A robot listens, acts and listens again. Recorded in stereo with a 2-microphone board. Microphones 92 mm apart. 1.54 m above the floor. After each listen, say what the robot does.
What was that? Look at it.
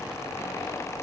Keep listening.
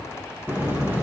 Turn 25° right.
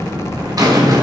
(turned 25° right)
Turn 135° right.
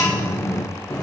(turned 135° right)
Turn 30° left.
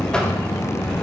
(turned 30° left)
Turn 10° left.
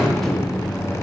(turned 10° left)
Found it: a buzzer, straight ahead, 1 to 2 m away.